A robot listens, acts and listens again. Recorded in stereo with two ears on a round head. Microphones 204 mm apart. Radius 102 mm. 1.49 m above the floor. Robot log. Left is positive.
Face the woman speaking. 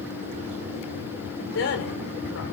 note: The woman speaking: about 60° left or 120° left.
cmd yaw +60
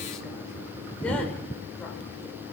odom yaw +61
cmd idle
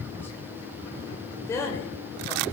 note: So it is at 15° left.
cmd yaw +15
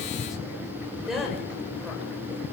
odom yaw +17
end: Found it: a woman speaking, straight ahead, over 4 m away.